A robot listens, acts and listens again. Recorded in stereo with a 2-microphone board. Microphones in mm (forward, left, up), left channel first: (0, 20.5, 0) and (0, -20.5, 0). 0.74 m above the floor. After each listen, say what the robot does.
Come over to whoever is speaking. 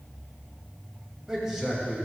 Turn 30° right.
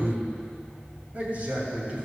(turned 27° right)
Turn 140° right.
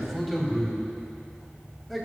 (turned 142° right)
Drive 1.0 m forward.
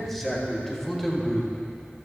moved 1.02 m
Drive 1.0 m forward.
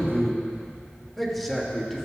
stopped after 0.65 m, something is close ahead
I am next to the man speaking.